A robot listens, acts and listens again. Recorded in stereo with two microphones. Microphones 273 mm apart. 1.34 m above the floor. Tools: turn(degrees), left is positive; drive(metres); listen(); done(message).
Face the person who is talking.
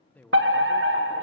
turn(degrees=30)
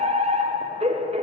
listen()
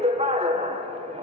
listen()
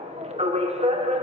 done("I heard a man speaking, but can't make it out now. It was about 25° right or 145° left.")